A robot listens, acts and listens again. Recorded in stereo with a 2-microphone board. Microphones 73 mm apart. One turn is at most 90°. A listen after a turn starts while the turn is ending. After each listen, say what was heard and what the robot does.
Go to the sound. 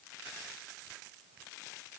Keep listening.
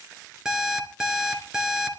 Turn 30° right.
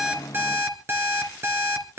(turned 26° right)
So it is at 145° right. Turn 90° right.
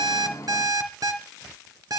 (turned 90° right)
The alarm clock is now 55° right. Turn 55° right.
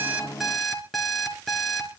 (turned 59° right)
Drive 1.0 m forward.
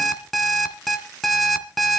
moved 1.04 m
Drive 1.0 m forward.
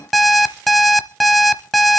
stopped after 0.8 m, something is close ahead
Arrived at the alarm clock, straight ahead.